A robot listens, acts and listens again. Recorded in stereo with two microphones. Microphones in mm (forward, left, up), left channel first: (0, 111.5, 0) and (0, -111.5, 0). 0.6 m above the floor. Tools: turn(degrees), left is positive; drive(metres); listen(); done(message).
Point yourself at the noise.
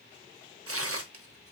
turn(degrees=-90)
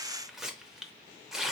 done("Found it: tearing paper, straight ahead.")